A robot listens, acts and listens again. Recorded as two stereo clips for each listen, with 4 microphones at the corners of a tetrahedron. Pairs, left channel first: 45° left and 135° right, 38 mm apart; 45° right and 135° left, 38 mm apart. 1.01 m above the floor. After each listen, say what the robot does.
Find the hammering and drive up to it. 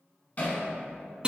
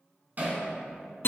Turn 95° left.
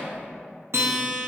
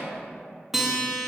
Keep listening.
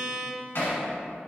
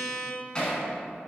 Turn 20° left.
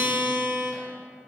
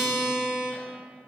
Keep listening.
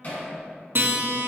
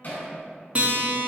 Drive 1.0 m forward.
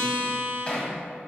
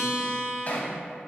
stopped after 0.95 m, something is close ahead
Turn 10° right.
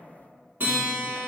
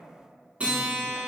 Keep listening.
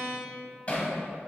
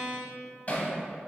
I am next to the hammering.